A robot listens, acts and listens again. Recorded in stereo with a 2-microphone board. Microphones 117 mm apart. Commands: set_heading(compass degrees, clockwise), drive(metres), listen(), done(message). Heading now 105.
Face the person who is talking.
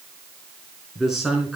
set_heading(75)
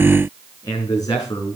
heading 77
set_heading(297)
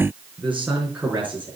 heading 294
set_heading(314)
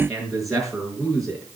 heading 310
done("Facing the man speaking, over 4 m away.")